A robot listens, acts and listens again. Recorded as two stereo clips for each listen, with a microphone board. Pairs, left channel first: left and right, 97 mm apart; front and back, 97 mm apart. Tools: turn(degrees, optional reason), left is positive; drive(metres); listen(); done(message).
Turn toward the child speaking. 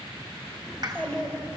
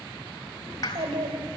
turn(degrees=170, reason="The child speaking: 170° left.")
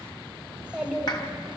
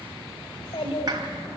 turn(degrees=-10, reason="The child speaking is now 10° right.")
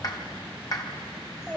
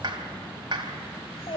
done("Found it: a child speaking, straight ahead, 2 to 4 m away.")